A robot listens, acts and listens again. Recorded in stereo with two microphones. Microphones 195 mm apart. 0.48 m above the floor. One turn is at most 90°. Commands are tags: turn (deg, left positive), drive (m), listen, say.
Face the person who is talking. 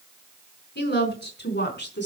<turn deg="65"/>
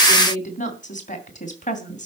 <turn deg="40"/>
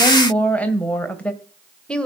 <say>Found it: a woman speaking, straight ahead, 1 to 2 m away.</say>